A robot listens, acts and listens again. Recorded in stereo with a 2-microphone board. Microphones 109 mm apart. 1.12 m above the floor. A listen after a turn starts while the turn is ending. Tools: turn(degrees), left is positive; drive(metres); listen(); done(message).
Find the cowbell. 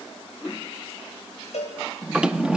turn(degrees=90)
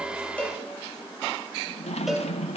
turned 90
done("Facing the cowbell.")